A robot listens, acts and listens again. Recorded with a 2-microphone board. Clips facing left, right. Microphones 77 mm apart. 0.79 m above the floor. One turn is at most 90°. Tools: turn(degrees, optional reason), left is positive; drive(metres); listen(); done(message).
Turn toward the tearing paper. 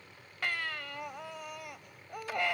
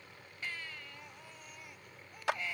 listen()
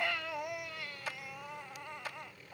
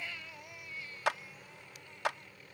listen()
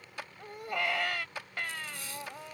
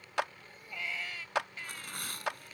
turn(degrees=-60, reason="The tearing paper: about 60° right or 120° right.")
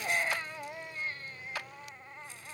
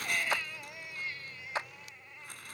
listen()
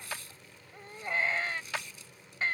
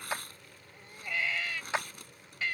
turn(degrees=-60, reason="So it is at 60° right.")
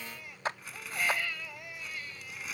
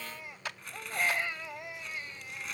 done("Facing the tearing paper.")